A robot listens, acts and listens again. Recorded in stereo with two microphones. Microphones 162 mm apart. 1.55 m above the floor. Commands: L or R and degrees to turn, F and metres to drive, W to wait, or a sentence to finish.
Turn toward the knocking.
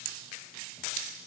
W
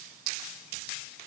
W
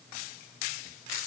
I can't make out knocking.